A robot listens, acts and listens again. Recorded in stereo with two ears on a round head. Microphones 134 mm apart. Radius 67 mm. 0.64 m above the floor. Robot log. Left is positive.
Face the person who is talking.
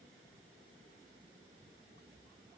cmd idle
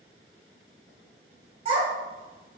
note: The child speaking: about 40° right or 140° right.
cmd yaw -40
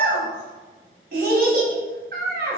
note: So it is at 90° right.
cmd yaw -90
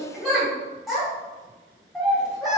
end: Found it: a child speaking, straight ahead, 1 to 2 m away.